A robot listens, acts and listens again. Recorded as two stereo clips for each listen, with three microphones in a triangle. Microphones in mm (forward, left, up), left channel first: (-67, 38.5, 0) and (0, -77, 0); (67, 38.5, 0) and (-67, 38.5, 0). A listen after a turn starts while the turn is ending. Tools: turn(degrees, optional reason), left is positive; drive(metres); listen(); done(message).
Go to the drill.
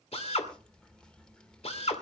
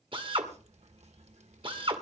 turn(degrees=140, reason="The drill: 140° left.")
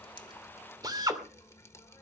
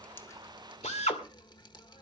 drive(metres=1.0)
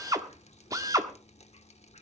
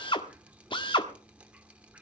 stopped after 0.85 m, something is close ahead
turn(degrees=-15, reason="The drill is now 15° right.")
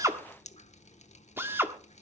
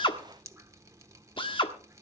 done("Arrived at the drill, straight ahead.")